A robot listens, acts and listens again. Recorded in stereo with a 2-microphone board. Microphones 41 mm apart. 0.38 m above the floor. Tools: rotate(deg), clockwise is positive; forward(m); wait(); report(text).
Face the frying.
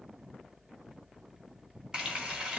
rotate(20)
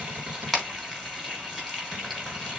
report("Facing the frying, 2 to 4 m away.")